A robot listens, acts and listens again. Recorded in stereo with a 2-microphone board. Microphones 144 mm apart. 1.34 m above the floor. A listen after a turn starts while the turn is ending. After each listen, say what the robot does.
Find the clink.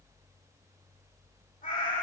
Keep listening.
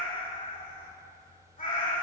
Keep listening.
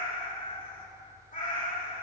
I can't make out a clink, only a cat meowing.